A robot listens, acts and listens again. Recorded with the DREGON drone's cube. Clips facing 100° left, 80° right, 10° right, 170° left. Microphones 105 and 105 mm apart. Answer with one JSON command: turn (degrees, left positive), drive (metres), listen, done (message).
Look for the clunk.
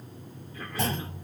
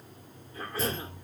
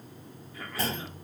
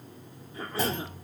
{"turn": 95}
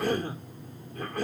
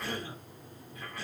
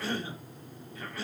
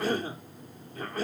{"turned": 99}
{"done": "I heard a clunk from this way, but can't make it out now."}